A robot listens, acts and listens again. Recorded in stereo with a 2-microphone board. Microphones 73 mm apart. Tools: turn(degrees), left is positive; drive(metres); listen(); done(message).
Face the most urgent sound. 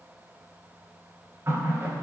listen()
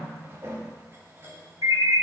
turn(degrees=-65)
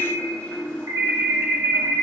turn(degrees=-45)
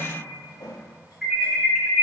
done("Facing the alarm, 2 to 4 m away.")